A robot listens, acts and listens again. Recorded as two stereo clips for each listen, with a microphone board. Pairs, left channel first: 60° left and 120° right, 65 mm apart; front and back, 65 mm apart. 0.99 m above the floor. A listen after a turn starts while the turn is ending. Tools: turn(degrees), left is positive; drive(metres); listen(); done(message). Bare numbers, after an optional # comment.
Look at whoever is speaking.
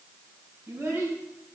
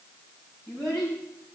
# The child speaking: straight behind.
turn(180)
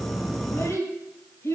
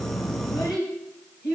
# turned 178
# The child speaking is now 10° left.
turn(10)
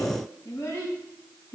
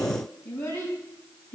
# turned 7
done("Found it: a child speaking, straight ahead.")